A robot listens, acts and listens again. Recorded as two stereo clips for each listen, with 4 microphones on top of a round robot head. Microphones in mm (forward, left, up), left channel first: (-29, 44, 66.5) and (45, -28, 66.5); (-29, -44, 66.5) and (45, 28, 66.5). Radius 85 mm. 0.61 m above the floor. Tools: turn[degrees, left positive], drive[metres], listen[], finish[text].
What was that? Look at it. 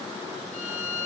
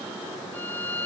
Thought: The violin: 150° left.
Action: turn[150]
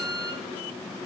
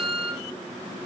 Action: finish[Found it: a violin, straight ahead.]